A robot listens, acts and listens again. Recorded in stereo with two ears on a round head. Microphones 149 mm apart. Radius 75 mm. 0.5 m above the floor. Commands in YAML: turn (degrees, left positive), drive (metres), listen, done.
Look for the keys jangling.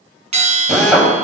listen: true
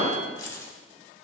turn: 20
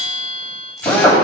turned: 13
listen: true
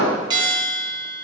listen: true
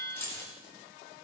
turn: 30
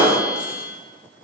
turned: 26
listen: true
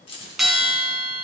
turn: 145
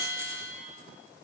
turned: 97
turn: 50
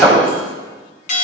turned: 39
turn: 10
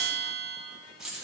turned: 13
done: "Found it: keys jangling, straight ahead."